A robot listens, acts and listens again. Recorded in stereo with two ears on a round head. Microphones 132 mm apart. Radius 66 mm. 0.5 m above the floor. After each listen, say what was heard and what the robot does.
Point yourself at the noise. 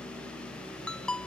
Turn 30° left.
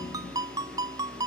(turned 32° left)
So it is at 25° right. Turn 25° right.
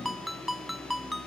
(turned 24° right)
Found it: a ringtone, straight ahead.